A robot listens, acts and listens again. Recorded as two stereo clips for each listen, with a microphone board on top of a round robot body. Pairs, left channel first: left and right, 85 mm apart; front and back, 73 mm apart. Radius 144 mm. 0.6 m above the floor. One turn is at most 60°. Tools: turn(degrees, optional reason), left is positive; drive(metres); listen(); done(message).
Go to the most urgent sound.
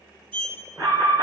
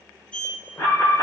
turn(degrees=-45, reason="The alarm: 45° right.")
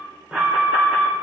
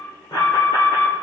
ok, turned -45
turn(degrees=-15, reason="The alarm is now 15° right.")
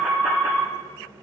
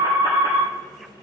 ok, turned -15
drive(metres=1.0)
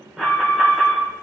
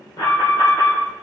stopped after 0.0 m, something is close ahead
done("Blocked. The alarm is further on, straight ahead.")